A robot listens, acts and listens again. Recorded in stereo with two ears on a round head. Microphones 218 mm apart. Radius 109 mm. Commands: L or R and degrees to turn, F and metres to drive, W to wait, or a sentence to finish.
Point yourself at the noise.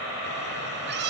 R50
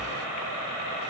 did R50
W
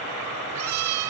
R80
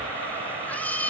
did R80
Facing the cat meowing, 2 to 4 m away.